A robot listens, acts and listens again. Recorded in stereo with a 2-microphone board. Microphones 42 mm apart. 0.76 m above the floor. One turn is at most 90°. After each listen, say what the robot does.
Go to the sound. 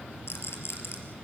Turn 90° left.
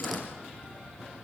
Keep listening.
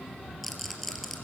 Drive 1.0 m forward.
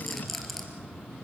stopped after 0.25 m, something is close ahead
Blocked. The rattle is further on, straight ahead.